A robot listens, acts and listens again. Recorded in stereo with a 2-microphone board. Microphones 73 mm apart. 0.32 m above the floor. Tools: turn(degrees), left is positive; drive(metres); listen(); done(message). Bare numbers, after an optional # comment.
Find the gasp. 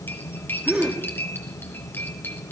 turn(-30)
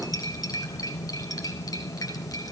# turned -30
listen()
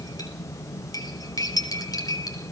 done("I heard a gasp, but can't make it out now. It was about 20° left or 140° right.")